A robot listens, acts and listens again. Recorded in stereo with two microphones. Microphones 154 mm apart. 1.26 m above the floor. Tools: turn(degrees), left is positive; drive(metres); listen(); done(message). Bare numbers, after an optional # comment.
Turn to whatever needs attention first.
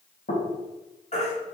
# The baby crying: about 50° left or 130° left.
turn(50)
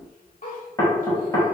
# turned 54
listen()
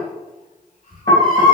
# So it is at 70° left.
turn(70)
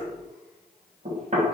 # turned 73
listen()
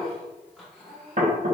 listen()
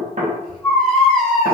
done("Facing the baby crying, 1 to 2 m away.")